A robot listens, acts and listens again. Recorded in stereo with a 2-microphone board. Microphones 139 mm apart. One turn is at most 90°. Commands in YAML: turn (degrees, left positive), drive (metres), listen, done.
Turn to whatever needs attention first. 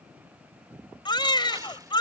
turn: 35
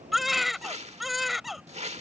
done: "Found it: a baby crying, straight ahead."